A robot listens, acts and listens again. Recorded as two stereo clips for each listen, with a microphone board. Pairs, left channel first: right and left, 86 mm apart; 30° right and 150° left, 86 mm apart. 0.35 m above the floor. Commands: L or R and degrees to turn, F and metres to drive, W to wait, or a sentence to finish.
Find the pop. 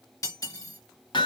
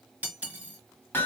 W
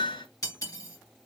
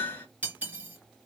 W
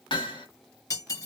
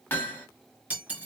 I can't make out a pop to turn to.